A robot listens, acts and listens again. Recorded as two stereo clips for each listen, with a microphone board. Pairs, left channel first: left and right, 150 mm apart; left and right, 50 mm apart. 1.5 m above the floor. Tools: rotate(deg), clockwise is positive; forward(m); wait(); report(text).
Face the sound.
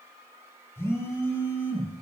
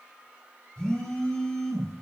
rotate(-20)
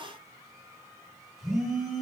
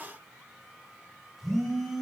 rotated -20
report("Found it: a phone buzzing, straight ahead, 2 to 4 m away.")